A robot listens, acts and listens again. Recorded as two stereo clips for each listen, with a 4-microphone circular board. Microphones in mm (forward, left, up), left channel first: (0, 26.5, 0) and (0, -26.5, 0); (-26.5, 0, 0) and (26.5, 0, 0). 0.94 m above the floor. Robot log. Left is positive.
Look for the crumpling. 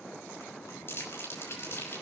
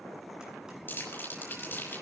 note: The crumpling: 130° left.
cmd yaw +130
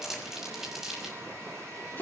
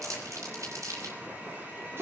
note: The crumpling is now 10° right.
cmd yaw -10
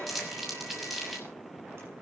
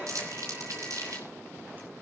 end: Facing the crumpling, over 4 m away.